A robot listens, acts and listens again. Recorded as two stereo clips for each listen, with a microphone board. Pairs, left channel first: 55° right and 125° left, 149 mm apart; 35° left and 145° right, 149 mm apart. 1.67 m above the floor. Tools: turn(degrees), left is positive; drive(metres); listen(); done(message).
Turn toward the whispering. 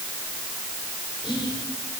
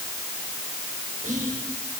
turn(degrees=-115)
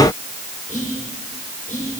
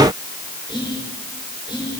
turn(degrees=-25)
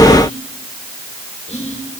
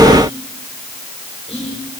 turn(degrees=-15)
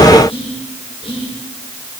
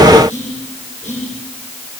done("Facing the whispering, over 4 m away.")